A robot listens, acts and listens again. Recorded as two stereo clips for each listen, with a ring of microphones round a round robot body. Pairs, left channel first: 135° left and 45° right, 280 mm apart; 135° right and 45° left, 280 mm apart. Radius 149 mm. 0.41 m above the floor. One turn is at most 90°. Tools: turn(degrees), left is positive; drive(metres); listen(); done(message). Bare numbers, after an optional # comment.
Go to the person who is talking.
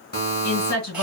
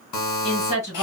# The woman speaking: 160° left.
turn(90)
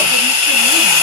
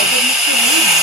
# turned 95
# Nothing new. It was at 65° left.
turn(65)
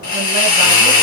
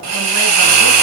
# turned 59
listen()
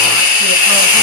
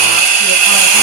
done("Facing where the woman speaking came from. I can't hear it now. I did not reach it.")